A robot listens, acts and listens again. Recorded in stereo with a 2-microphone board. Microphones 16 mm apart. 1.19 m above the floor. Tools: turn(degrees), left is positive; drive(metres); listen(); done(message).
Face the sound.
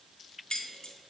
turn(degrees=70)
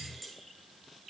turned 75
done("Found it: keys jangling, straight ahead.")